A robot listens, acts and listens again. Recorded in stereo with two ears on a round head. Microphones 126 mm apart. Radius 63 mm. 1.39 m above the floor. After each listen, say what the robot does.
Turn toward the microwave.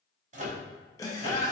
Turn 55° right.
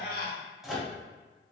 Facing the microwave.